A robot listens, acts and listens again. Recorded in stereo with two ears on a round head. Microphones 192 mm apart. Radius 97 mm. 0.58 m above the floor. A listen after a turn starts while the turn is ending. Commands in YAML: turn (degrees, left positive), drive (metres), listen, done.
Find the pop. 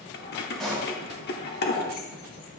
turn: 30
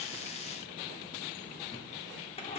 listen: true
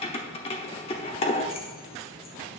done: "I heard a pop, but can't make it out now. It was about 30° right or 150° left."